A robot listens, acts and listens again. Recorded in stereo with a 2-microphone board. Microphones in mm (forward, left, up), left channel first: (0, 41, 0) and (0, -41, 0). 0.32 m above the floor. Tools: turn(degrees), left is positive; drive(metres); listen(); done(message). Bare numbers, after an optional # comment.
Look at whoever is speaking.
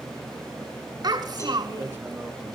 # The child speaking: about 50° right or 130° right.
turn(-50)
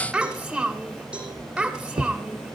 done("Facing the child speaking.")